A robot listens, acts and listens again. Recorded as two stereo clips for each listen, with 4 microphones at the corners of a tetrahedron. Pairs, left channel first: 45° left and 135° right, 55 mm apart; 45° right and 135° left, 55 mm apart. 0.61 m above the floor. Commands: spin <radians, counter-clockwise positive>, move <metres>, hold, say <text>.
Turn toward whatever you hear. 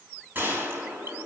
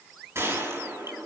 spin 3.05
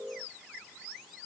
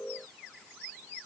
say I heard a gunshot from this way, but can't make it out now.